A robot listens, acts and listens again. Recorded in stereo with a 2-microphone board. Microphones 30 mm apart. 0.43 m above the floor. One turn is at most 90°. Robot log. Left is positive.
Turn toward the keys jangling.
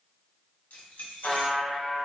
note: The keys jangling: about 60° left or 120° left.
cmd yaw +60
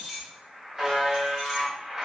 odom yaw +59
note: So it is at 10° right.
cmd yaw -10
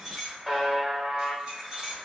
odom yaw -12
note: The keys jangling is now 25° right.
cmd yaw -25
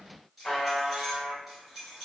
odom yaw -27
end: Facing the keys jangling.